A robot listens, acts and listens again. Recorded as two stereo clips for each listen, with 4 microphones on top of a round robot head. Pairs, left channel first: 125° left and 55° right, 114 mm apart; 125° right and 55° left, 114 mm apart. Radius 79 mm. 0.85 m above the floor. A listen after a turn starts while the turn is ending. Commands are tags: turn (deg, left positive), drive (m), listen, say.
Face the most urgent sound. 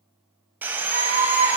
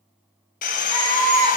<turn deg="-90"/>
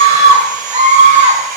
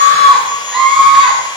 <turn deg="-30"/>
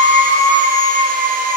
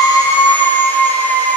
<turn deg="-10"/>
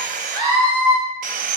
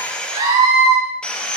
<say>Found it: a scream, straight ahead.</say>